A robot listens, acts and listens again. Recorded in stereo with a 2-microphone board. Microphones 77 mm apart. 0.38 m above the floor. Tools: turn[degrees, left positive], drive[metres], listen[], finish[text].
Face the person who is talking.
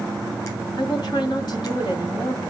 Thought: The woman speaking: about 60° left or 120° left.
Action: turn[60]
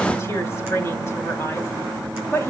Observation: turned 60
Thought: So it is at 35° left.
Action: turn[35]
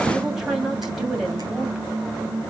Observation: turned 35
Action: finish[Facing the woman speaking.]